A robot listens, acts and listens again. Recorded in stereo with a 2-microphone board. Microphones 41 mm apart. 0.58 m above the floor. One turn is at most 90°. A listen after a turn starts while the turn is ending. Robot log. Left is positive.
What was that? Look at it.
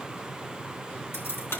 cmd yaw +90
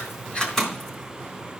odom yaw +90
note: So it is at 10° left.
cmd yaw +10
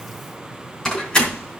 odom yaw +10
note: The keys jangling is now 20° left.
cmd yaw +20
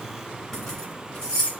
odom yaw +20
note: The keys jangling is now 20° left.
cmd yaw +20
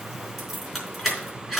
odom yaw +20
end: Facing the keys jangling.